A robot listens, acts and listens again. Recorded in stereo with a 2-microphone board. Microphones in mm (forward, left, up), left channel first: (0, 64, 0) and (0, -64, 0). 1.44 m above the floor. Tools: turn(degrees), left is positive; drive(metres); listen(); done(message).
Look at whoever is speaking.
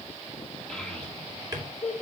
turn(degrees=30)
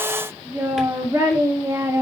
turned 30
turn(degrees=-25)
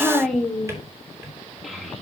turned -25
done("Found it: a child speaking, straight ahead, 2 to 4 m away.")